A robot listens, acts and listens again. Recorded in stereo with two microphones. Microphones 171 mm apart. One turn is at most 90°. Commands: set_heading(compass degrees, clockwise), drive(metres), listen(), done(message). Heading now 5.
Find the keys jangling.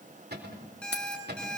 set_heading(275)
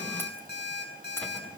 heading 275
listen()
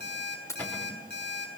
set_heading(260)
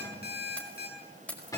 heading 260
set_heading(250)
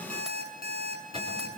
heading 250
listen()
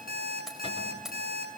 done("Found it: keys jangling, straight ahead, over 4 m away.")